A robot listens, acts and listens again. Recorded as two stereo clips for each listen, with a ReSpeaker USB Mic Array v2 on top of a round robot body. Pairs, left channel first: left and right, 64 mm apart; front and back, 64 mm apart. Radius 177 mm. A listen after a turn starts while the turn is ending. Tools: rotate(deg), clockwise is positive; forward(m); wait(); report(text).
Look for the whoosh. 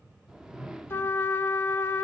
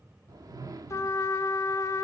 rotate(170)
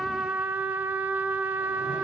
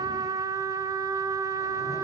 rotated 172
wait()
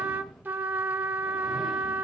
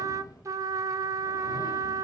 wait()
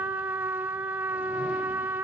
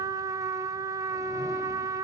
report("I heard a whoosh from this way, but can't make it out now.")